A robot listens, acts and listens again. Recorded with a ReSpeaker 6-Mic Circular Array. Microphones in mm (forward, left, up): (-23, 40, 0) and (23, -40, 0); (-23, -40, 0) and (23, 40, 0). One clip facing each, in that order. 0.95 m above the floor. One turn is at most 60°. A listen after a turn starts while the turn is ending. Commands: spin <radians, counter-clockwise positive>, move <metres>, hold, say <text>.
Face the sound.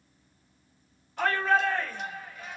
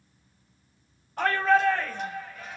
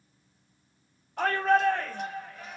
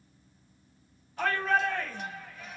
spin -1.05
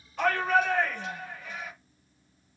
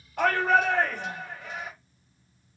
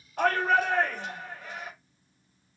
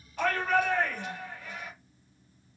spin -1.05
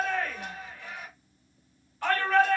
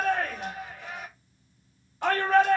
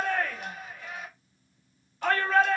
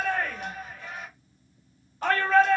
say Facing the shout.